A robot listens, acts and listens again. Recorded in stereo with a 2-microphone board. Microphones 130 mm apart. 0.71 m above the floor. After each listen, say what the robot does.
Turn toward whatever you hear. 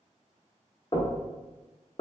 Turn 40° left.
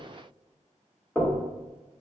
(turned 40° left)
Found it: knocking, straight ahead.